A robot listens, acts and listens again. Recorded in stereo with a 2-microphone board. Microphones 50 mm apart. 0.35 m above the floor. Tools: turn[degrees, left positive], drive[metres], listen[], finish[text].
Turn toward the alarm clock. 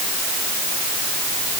Action: listen[]
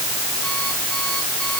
Action: listen[]
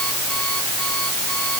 Action: finish[I can't make out an alarm clock to turn to.]